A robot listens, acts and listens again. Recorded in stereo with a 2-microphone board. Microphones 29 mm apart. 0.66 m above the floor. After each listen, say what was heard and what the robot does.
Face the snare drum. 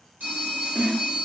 The snare drum: about 70° right or 110° right. Turn 70° right.
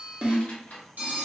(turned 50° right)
So it is at 40° right. Turn 40° right.
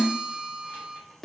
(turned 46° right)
Facing the snare drum, under 1 m away.